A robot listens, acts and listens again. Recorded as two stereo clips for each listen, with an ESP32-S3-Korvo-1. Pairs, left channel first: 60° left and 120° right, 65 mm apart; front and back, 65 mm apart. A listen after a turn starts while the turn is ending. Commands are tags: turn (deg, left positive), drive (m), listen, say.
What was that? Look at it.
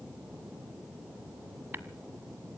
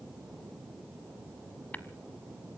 <turn deg="-65"/>
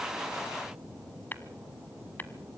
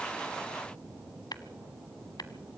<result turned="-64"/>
<say>Facing the tapping, 1 to 2 m away.</say>